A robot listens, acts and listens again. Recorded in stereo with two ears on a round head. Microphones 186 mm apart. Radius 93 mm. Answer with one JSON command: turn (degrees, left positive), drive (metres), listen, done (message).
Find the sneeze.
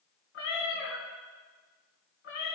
{"listen": true}
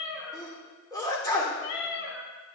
{"turn": 20}
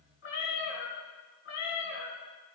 {"listen": true}
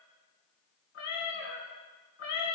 {"done": "I heard a sneeze, but can't make it out now. It was about straight ahead or 140° left."}